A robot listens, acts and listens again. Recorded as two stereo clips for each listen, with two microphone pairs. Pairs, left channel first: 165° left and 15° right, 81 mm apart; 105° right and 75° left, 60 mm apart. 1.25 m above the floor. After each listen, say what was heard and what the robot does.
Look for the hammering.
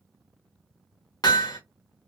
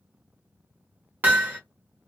The hammering: 135° left. Turn 135° left.
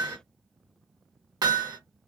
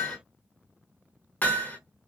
The hammering is now 50° right. Turn 50° right.
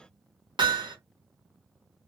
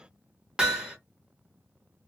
Found it: hammering, straight ahead, 1 to 2 m away.